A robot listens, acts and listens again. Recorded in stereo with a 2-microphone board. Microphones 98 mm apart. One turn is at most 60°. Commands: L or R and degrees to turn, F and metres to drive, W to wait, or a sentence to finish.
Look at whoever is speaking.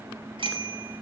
W
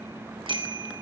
W
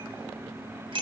I can't make out anyone speaking to turn to.